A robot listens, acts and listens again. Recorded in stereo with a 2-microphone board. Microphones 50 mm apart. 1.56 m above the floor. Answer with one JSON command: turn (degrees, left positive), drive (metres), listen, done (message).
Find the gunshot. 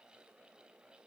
{"listen": true}
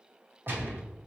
{"turn": -45}
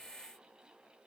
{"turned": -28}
{"listen": true}
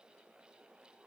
{"done": "I heard a gunshot, but can't make it out now. It was about 15° right or 110° right."}